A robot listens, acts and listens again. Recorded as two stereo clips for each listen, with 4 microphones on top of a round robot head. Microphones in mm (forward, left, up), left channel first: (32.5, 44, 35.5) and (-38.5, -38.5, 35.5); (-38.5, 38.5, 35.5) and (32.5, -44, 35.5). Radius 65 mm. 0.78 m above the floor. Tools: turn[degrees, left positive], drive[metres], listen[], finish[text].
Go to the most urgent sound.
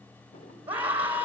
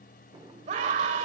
Thought: The scream: 55° right.
Action: turn[-55]
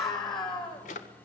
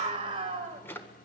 Action: drive[1.0]
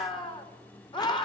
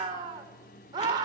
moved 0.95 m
Action: drive[1.0]
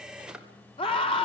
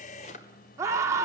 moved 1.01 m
Thought: The scream is now 15° left.
Action: turn[15]
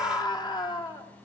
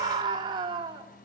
Action: drive[1.0]
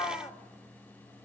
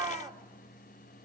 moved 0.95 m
Action: drive[1.0]
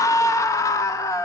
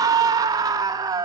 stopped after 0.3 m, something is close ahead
Action: finish[I am next to the scream.]